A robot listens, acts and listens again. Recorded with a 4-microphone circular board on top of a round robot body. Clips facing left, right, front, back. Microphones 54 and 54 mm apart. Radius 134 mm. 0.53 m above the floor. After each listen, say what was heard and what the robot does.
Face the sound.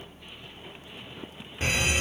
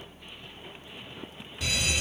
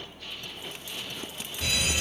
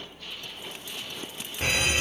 The fire alarm: 135° left. Turn 135° left.
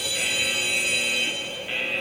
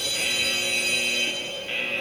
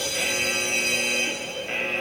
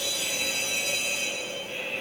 The fire alarm is now 10° left. Turn 10° left.
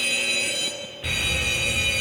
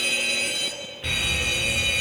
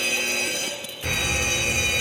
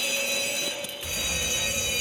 Facing the fire alarm, 2 to 4 m away.